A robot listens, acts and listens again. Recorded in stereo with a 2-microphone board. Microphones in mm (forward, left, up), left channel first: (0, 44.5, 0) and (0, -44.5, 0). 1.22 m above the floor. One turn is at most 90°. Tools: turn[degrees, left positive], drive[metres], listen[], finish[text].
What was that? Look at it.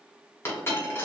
Thought: The dropped coin: about 30° left or 150° left.
Action: turn[30]
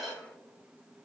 Action: finish[Facing the dropped coin.]